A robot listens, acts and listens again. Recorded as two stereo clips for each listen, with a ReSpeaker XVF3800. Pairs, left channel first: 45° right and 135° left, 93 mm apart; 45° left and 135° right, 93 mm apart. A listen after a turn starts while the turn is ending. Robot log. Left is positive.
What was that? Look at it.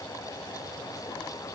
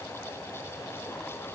cmd idle
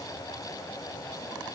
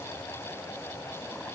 cmd idle
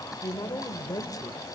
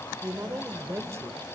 note: The woman speaking: 85° right.
cmd yaw -85
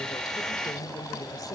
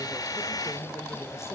cmd idle
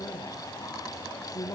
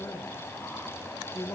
note: The woman speaking is now 10° right.
cmd yaw -10
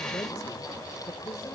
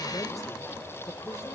end: Facing the woman speaking.